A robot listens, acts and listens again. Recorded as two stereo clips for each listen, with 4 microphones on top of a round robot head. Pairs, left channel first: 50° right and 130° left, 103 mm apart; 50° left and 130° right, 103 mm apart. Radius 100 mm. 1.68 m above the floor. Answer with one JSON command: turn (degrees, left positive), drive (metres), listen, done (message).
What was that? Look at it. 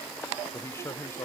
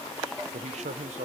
{"turn": -115}
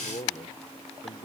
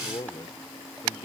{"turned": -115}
{"done": "Facing the man speaking."}